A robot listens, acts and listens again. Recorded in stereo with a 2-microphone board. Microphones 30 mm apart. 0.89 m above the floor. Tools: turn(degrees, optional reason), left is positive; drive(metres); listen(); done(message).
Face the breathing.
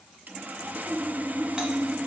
listen()
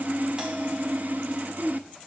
listen()
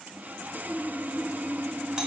done("I can't make out breathing, only sawing.")